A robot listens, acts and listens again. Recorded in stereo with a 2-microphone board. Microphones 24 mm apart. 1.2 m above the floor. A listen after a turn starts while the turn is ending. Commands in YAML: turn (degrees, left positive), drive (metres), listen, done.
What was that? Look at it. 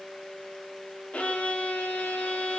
turn: 90
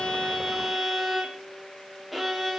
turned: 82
done: "Facing the violin."